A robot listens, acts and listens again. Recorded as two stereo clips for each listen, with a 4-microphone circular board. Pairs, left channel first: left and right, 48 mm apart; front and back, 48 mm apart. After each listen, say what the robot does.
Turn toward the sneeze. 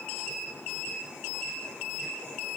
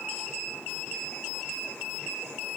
Keep listening.
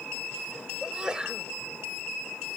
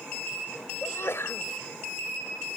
Turn 20° right.
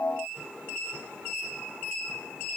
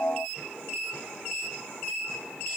I heard a sneeze from this way, but can't make it out now.